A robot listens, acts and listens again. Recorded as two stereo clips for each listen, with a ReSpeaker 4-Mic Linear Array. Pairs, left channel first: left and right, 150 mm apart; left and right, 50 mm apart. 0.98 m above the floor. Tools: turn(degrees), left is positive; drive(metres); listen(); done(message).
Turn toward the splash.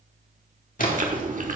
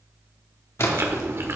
turn(degrees=65)
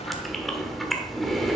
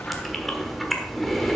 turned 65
listen()
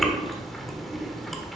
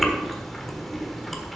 done("I heard a splash, but can't make it out now. It was about straight ahead or 50° left.")